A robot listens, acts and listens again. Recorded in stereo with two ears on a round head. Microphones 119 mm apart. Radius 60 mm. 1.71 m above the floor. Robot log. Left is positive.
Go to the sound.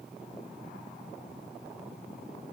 cmd idle
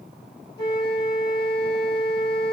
note: The flute: about 30° left or 150° left.
cmd yaw +30
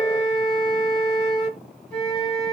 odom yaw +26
note: So it is at 10° left.
cmd yaw +10
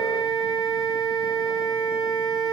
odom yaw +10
cmd fwd 1.0
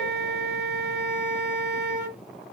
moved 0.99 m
cmd fwd 1.0
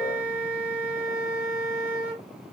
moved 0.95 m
note: The flute is now 15° right.
cmd yaw -15
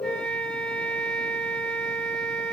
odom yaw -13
cmd fwd 1.0
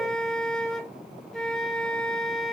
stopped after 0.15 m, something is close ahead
end: I am next to the flute.